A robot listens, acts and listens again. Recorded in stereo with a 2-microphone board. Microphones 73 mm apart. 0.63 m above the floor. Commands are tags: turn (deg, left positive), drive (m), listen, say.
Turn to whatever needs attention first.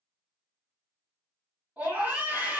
<turn deg="-15"/>
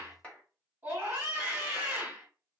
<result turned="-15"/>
<turn deg="-150"/>
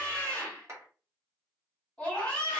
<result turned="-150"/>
<turn deg="10"/>
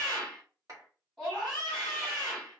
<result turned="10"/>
<say>Facing the scream.</say>